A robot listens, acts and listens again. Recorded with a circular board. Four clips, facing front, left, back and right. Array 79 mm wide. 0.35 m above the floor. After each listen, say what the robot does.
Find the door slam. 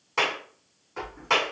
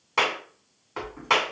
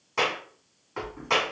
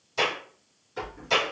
Turn 110° left.
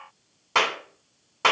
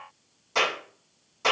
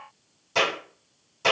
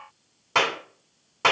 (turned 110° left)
Facing where the door slam came from. I can't hear it now.